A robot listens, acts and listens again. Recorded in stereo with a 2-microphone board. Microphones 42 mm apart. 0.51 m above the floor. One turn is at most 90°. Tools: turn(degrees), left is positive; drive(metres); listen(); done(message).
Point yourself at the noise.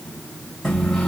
turn(degrees=30)
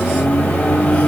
turn(degrees=90)
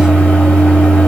turn(degrees=30)
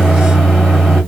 done("Found it: a microwave, straight ahead, 1 to 2 m away.")